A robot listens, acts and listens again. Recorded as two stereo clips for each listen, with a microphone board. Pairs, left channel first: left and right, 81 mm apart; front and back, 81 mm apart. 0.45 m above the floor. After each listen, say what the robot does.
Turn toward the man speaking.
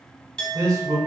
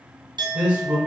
Turn 115° right.
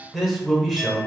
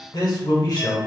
Found it: a man speaking, straight ahead, 1 to 2 m away.